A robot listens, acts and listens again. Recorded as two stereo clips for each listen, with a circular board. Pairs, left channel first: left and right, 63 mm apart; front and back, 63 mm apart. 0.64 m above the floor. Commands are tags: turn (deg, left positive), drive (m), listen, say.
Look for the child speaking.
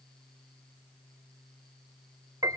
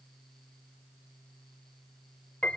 <listen/>
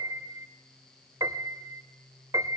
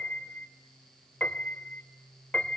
<listen/>
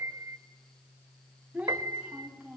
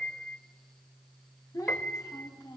<turn deg="-20"/>
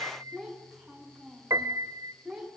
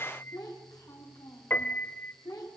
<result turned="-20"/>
<turn deg="-10"/>
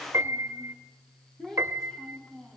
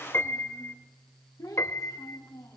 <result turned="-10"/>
<say>Facing the child speaking, over 4 m away.</say>